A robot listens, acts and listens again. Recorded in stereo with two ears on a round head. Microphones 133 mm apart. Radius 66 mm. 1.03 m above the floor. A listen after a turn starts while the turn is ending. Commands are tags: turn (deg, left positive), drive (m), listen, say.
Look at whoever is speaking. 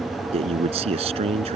<turn deg="-40"/>
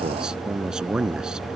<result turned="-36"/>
<say>Found it: a man speaking, straight ahead.</say>